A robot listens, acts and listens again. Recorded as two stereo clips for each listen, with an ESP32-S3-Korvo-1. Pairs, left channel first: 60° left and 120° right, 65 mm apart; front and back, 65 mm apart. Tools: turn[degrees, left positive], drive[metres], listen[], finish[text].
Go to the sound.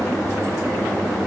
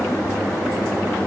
Action: listen[]
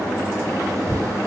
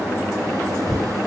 Action: listen[]
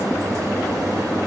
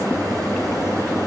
Action: finish[I can't make out anything to turn to.]